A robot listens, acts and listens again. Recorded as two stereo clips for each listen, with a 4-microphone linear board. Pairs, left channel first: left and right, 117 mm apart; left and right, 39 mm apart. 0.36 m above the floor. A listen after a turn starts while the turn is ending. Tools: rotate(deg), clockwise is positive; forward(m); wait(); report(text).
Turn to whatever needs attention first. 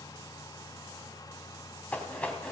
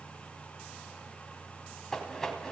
wait()
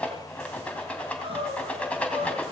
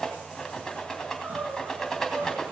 rotate(55)
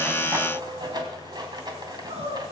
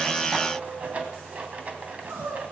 rotate(70)
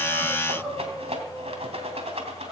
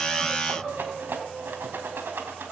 report("Facing the crying.")